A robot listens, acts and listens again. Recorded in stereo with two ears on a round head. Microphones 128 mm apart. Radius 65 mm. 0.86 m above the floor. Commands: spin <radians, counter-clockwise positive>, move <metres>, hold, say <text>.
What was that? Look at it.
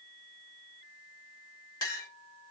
spin 0.44
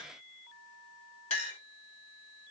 spin 2.27
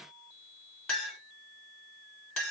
say Facing the clink.